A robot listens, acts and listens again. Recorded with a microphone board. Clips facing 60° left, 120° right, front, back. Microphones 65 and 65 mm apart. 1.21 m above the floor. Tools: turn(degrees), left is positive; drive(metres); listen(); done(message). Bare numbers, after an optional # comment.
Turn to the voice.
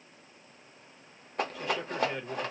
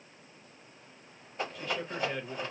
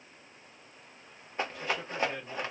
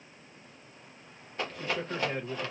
# The man speaking: 135° left.
turn(135)
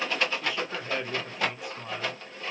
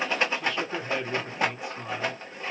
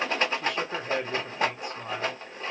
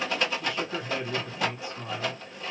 # The man speaking is now 35° right.
turn(-35)
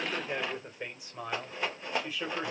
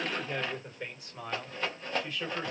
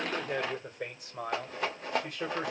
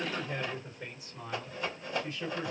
# The man speaking is now 20° right.
turn(-20)
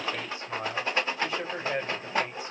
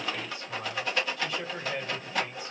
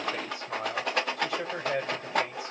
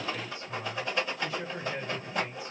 done("Facing the man speaking.")